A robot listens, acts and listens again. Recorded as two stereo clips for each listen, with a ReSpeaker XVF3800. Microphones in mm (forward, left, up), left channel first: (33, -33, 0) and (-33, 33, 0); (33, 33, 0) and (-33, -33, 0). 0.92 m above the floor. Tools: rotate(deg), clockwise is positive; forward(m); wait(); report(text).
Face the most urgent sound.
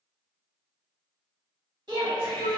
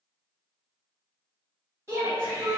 rotate(-170)
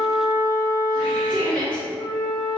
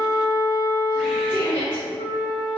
rotate(-35)
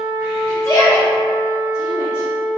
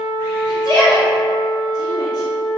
report("Found it: a shout, straight ahead.")